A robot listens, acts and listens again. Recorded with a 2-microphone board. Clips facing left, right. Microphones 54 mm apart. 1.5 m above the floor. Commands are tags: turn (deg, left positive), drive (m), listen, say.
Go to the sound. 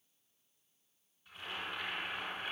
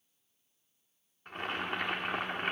<turn deg="-60"/>
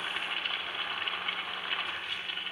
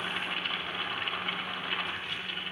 <drive m="1.0"/>
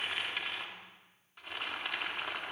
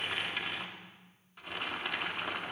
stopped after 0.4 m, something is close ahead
<say>Blocked. The boiling is further on, straight ahead.</say>